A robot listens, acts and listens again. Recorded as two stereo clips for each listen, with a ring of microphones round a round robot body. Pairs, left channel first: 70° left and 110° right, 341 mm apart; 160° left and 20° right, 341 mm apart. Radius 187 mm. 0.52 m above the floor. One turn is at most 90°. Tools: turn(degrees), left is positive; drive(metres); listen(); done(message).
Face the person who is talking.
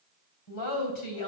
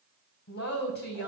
turn(degrees=90)
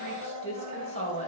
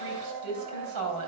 done("Found it: a woman speaking, straight ahead, 2 to 4 m away.")